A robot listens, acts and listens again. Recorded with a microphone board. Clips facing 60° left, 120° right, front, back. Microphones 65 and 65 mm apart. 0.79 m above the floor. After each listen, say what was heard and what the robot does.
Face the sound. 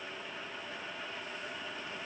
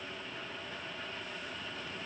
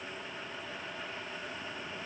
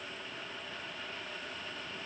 Keep listening.
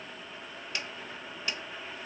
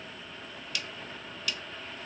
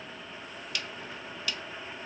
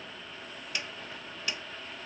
The snare drum: 115° left. Turn 115° left.
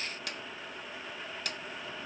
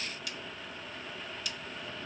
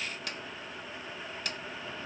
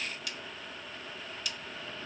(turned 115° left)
The snare drum is now 35° left. Turn 35° left.
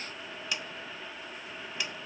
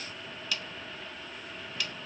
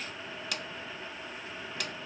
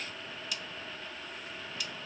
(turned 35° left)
Facing the snare drum.